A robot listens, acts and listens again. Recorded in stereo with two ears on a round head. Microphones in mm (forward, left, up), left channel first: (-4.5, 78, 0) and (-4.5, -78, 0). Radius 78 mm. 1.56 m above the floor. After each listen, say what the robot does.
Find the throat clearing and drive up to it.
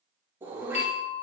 Turn 30° right.
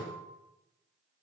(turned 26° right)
Keep listening.
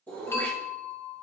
Turn 10° left.
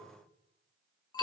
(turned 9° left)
Keep listening.
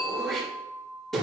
Drive 1.0 m forward.
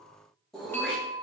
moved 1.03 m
Drive 1.0 m forward.
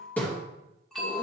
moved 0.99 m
Turn 10° left.
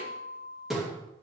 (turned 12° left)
Drive 1.0 m forward.
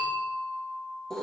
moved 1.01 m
Drive 1.0 m forward.
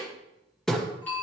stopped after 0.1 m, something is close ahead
Arrived at the throat clearing, straight ahead.